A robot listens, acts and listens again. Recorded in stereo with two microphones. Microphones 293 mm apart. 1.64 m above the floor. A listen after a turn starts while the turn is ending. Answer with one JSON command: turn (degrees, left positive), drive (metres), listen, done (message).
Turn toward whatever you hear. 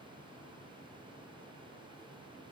{"listen": true}
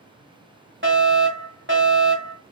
{"turn": -40}
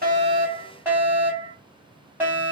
{"turn": -10}
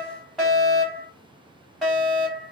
{"done": "Facing the fire alarm."}